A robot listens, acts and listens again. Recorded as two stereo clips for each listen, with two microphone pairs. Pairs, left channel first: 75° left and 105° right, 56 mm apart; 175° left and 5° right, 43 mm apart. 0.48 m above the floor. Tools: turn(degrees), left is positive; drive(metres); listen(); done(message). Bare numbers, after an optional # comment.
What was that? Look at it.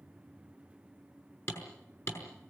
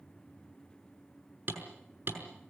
# The hammering: 35° left.
turn(35)
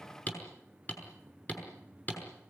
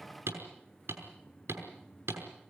# The hammering is now 15° left.
turn(15)
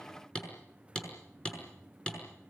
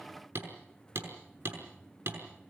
done("Facing the hammering, over 4 m away.")